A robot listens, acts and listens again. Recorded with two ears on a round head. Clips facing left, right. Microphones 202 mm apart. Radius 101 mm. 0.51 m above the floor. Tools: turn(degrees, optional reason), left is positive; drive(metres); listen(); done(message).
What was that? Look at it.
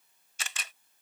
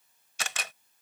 turn(degrees=-55, reason="The camera shutter: about 55° right or 125° right.")
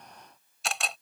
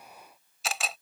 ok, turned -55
done("Found it: a camera shutter, straight ahead.")